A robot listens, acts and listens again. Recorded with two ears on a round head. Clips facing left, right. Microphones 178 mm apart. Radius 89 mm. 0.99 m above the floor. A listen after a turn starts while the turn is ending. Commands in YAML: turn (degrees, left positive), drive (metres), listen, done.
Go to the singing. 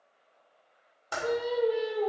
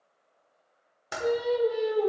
turn: -70
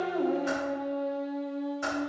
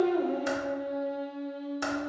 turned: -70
turn: -40
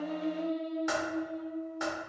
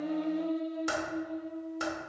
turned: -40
drive: 1.0
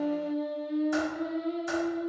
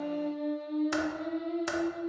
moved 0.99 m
turn: 10
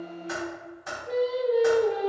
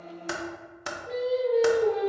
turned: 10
drive: 1.0
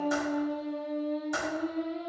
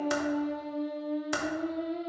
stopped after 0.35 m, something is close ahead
done: "I am next to the singing."